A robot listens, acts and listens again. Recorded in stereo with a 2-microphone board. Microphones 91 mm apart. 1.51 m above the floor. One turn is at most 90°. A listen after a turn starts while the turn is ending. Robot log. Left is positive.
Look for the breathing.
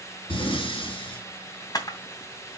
note: The breathing: about 70° left or 110° left.
cmd yaw +70
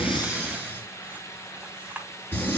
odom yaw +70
note: So it is at 25° left.
cmd yaw +25
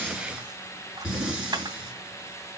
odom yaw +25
note: The breathing is now 10° right.
cmd yaw -10
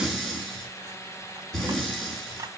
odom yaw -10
end: Found it: breathing, straight ahead, 2 to 4 m away.